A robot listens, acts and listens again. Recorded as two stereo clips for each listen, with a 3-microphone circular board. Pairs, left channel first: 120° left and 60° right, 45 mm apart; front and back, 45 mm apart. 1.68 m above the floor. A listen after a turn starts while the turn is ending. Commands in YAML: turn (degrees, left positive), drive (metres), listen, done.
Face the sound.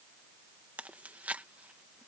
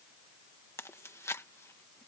done: "Facing the chewing."